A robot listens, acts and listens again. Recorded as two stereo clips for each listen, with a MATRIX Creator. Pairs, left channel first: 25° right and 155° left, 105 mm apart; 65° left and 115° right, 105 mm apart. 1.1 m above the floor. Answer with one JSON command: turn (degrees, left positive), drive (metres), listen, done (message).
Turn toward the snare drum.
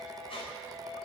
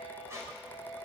{"listen": true}
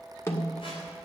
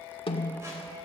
{"turn": 40}
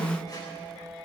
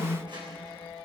{"turn": 15}
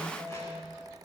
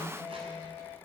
{"listen": true}
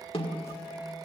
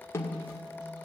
{"done": "Found it: a snare drum, straight ahead."}